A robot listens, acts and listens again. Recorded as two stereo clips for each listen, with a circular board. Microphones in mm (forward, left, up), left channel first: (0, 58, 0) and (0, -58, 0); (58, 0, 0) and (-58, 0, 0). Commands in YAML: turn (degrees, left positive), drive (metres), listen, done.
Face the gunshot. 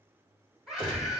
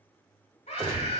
turn: 140
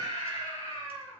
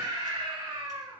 done: "I heard a gunshot from this way, but can't make it out now."